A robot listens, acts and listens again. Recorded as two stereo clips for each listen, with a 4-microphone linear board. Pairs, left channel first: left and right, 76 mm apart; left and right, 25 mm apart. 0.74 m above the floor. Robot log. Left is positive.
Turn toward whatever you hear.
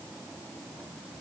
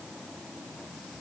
cmd idle
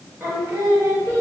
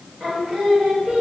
note: The singing: about 35° right or 145° right.
cmd yaw -35
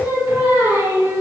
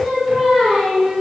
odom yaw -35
note: The singing: about 35° right or 145° right.
cmd yaw -35
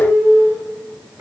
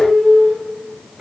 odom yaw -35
note: The singing: about 40° right or 140° right.
cmd yaw -40
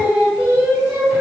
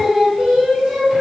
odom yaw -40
note: The singing: about 30° right or 150° right.
cmd yaw -30
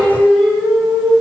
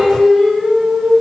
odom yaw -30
end: Found it: singing, straight ahead, 1 to 2 m away.